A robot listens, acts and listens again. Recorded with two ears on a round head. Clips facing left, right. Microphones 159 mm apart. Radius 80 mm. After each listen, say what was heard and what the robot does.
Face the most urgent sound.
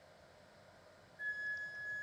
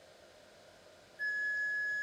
Keep listening.
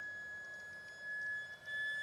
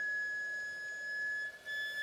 Keep listening.
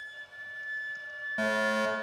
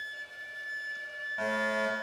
The fire alarm: about 50° left or 130° left. Turn 50° left.
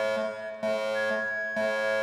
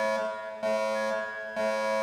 Facing the fire alarm, over 4 m away.